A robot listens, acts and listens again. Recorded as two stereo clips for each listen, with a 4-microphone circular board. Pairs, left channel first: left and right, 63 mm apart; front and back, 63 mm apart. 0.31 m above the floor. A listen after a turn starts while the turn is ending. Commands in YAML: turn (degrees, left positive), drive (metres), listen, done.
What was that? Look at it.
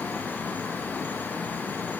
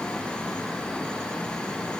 listen: true
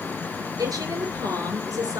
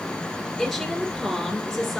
turn: -85
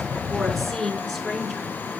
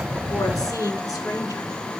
done: "Facing the woman speaking, over 4 m away."